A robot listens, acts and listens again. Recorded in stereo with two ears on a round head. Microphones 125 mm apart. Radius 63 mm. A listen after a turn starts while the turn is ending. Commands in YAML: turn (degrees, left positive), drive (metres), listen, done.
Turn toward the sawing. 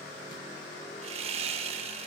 turn: -45
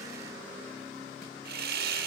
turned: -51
turn: -85
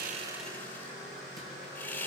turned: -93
turn: 10
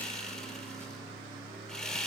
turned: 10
done: "Found it: sawing, straight ahead."